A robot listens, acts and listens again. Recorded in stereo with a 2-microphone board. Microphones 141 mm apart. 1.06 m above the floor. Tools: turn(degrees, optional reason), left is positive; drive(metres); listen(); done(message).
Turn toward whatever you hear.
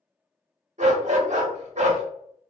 turn(degrees=-60, reason="The dog barking: about 60° right or 120° right.")
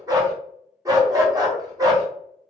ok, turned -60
turn(degrees=-30, reason="So it is at 30° right.")
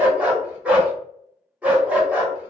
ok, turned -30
turn(degrees=-10, reason="The dog barking is now 10° right.")
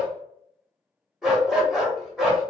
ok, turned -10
done("Facing the dog barking, under 1 m away.")